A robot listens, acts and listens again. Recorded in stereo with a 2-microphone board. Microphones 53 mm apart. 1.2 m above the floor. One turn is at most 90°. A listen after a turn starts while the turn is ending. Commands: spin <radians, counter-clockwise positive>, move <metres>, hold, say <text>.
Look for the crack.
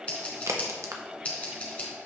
spin -1.31
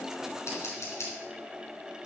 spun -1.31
hold
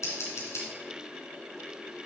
say I heard a crack, but can't make it out now. It was about straight ahead or 30° right.